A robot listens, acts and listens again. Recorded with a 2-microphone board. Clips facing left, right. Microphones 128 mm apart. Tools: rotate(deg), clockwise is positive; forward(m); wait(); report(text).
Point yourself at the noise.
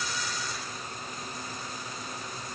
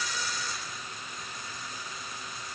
wait()
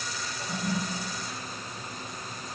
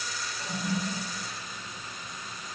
rotate(-15)
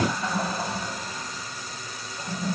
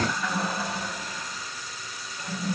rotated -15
rotate(-150)
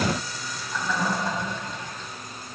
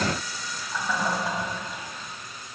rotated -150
rotate(10)
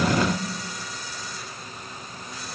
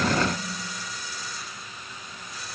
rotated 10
report("Found it: a toilet flushing, straight ahead, over 4 m away.")